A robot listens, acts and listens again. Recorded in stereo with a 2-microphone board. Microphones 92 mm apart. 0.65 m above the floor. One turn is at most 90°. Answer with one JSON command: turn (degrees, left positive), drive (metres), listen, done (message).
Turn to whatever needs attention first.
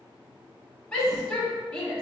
{"turn": 30}
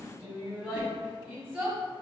{"turn": -20}
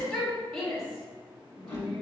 {"done": "Found it: a shout, straight ahead."}